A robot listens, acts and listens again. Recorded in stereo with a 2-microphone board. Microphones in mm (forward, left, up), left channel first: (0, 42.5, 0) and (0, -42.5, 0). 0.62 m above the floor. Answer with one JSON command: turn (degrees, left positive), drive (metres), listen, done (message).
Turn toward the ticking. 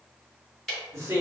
{"turn": 30}
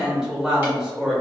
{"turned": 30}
{"listen": true}
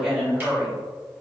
{"listen": true}
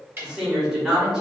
{"turn": -25}
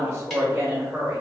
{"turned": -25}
{"listen": true}
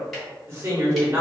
{"listen": true}
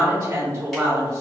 {"done": "I heard ticking from this way, but can't make it out now."}